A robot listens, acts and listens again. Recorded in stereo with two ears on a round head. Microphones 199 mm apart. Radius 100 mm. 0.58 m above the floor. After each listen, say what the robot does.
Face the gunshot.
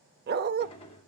Turn 25° left.
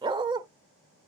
Keep listening.
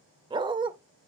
I heard a gunshot, but can't make it out now. It was about straight ahead or 130° left.